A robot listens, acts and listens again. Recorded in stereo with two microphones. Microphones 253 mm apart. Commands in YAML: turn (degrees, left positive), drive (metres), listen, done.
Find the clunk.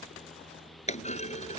turn: 25
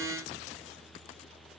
listen: true
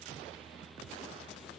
done: "I heard a clunk, but can't make it out now. It was about straight ahead or 130° left."